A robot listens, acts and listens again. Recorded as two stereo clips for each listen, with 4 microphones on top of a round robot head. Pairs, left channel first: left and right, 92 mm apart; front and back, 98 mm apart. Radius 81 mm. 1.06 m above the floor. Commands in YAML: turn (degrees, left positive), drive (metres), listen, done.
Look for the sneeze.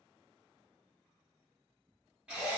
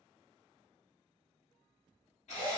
listen: true
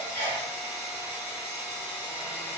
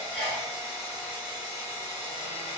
turn: -95
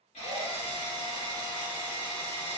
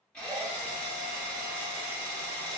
done: "I heard a sneeze from this way, but can't make it out now."